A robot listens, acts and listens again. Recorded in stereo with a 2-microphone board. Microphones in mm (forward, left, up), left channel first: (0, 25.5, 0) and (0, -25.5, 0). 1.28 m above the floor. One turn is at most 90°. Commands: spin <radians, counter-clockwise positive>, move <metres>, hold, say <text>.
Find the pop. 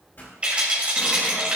spin 0.70
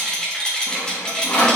hold
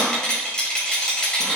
say I heard a pop, but can't make it out now. It was about straight ahead or 100° left.